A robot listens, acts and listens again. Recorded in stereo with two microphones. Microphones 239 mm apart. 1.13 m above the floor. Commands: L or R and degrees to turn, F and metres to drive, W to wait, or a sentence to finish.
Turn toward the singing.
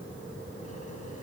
W
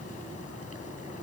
W
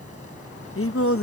L65
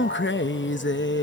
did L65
L50
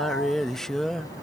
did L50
Facing the singing.